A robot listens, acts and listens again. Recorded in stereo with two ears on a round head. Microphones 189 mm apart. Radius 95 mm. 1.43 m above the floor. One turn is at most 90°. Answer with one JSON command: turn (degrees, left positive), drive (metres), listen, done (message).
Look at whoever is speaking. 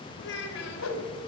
{"turn": 60}
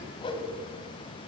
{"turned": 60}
{"listen": true}
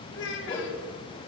{"turn": 60}
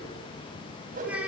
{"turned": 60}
{"done": "Facing the child speaking, over 4 m away."}